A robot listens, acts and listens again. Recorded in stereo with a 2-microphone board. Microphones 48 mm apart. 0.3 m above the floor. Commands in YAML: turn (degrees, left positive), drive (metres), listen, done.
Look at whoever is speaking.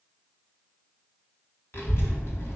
turn: 55
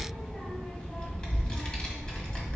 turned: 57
turn: 25
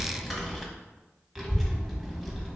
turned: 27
done: "Facing the child speaking, 1 to 2 m away."